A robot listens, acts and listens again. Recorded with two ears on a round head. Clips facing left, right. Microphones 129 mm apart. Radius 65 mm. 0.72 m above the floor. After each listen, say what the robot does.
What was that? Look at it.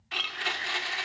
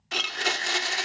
Turn 50° right.
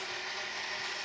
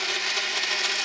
Turn 80° right.
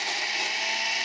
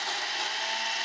Turn 15° left.
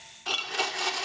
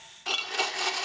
Found it: a blender, straight ahead.